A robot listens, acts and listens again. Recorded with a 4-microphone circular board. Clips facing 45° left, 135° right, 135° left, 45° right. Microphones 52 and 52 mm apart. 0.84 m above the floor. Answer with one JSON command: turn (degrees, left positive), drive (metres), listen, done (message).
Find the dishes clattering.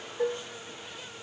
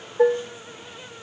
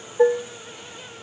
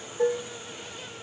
{"turn": -175}
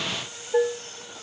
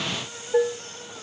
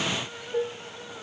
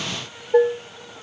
{"turn": -40}
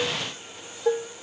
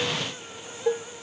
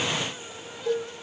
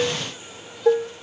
{"turn": -30}
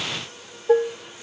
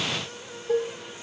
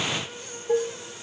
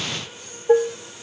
{"done": "Facing the dishes clattering, 1 to 2 m away."}